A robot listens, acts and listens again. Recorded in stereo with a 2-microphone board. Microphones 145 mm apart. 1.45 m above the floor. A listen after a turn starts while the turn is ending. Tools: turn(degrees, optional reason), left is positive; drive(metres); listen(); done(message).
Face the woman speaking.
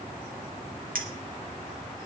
listen()
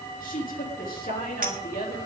turn(degrees=90)
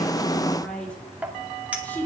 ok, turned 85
turn(degrees=15, reason="So it is at 15° left.")
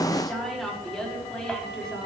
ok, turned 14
done("Facing the woman speaking.")